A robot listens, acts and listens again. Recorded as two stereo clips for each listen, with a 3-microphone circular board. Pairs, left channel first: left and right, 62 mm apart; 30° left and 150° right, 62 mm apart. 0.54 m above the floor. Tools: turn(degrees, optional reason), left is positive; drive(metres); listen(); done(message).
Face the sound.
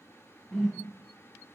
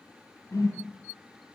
done("Facing the whoosh.")